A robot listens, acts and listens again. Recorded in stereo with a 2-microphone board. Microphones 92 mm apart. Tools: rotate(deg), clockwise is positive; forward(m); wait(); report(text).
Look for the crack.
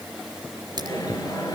rotate(50)
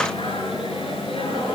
wait()
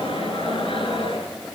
report("I heard a crack, but can't make it out now. It was about straight ahead or 80° right.")